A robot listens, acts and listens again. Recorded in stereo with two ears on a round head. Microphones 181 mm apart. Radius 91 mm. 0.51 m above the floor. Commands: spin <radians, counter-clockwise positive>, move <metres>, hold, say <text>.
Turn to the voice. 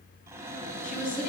spin 0.79
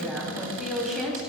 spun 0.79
say Facing the woman speaking, 2 to 4 m away.